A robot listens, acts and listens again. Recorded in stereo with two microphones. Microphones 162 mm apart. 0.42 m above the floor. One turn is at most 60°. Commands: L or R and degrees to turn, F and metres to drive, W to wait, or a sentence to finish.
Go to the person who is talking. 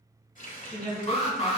L30
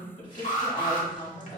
L60
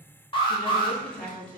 L60
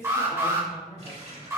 L20
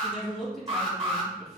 F1.0
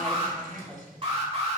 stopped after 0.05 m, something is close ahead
Something is in my way. I am facing the woman speaking but have not reached it.